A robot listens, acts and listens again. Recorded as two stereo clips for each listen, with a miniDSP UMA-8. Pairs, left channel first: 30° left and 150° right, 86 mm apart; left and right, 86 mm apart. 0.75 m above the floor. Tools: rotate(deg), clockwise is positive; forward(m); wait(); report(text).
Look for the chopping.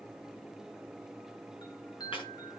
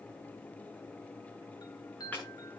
wait()
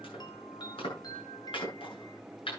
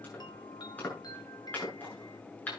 rotate(-20)
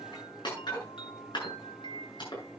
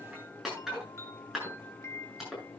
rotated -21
report("Found it: chopping, straight ahead.")